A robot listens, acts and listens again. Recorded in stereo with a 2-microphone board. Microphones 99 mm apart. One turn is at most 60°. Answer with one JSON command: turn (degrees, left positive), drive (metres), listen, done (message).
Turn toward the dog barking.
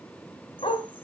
{"turn": 60}
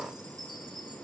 {"listen": true}
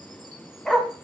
{"done": "Found it: a dog barking, straight ahead."}